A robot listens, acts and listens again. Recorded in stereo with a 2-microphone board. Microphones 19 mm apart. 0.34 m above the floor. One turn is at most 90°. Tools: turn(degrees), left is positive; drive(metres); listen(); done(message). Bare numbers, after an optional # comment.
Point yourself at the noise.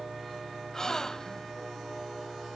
# The gasp: about 30° left or 150° left.
turn(30)
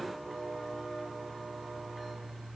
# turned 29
listen()
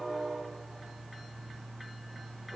done("I heard a gasp, but can't make it out now. It was about straight ahead or 120° left.")